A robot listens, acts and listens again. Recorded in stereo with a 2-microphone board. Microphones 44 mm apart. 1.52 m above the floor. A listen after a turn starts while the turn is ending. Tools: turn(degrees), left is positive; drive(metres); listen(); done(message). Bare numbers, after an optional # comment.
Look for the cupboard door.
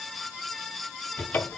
# The cupboard door: about 45° left or 135° left.
turn(45)
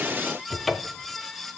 done("Found it: a cupboard door, straight ahead.")